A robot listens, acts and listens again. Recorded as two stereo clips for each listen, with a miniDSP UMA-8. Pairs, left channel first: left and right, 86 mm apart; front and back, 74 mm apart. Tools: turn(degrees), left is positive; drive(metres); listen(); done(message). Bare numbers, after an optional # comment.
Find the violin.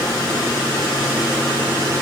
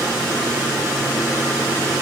listen()
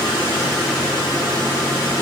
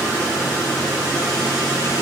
listen()
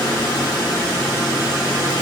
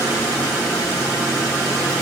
done("I can't make out a violin to turn to.")